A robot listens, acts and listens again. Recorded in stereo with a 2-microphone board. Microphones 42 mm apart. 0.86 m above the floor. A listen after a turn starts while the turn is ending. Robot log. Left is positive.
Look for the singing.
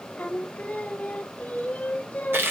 note: The singing: about 40° left or 140° left.
cmd yaw +40
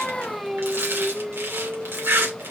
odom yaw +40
end: Found it: singing, straight ahead.